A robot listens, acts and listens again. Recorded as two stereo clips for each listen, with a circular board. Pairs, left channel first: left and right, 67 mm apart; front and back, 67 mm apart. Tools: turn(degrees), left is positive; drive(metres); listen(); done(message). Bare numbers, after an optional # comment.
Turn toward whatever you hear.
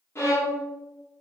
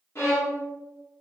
# The violin: 45° left.
turn(45)
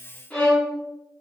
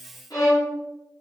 # The violin is now 20° left.
turn(20)
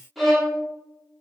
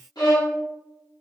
done("Found it: a violin, straight ahead.")